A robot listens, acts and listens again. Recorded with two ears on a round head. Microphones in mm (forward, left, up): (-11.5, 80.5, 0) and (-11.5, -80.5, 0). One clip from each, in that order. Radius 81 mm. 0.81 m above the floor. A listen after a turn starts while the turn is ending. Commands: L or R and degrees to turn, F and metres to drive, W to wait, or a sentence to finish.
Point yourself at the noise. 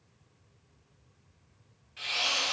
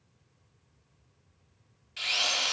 R75
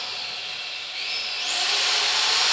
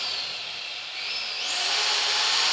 Found it: a drill, straight ahead.